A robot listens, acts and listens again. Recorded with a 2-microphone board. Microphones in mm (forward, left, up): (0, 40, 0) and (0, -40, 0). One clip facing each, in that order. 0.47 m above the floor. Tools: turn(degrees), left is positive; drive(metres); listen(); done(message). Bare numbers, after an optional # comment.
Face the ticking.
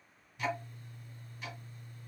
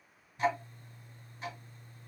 # The ticking: about 35° right or 145° right.
turn(-35)
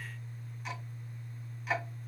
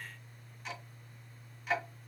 done("Facing the ticking, 1 to 2 m away.")